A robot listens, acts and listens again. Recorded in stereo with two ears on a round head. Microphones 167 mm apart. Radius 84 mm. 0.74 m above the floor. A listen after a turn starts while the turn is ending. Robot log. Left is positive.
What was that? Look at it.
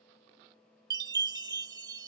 note: The chime: about 20° right or 160° right.
cmd yaw -20
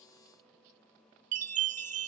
note: So it is at 140° right.
cmd yaw -140
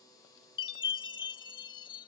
note: The chime is now 25° left.
cmd yaw +25
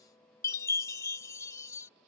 note: The chime is now 15° left.
cmd yaw +15
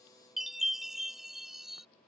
end: Facing the chime.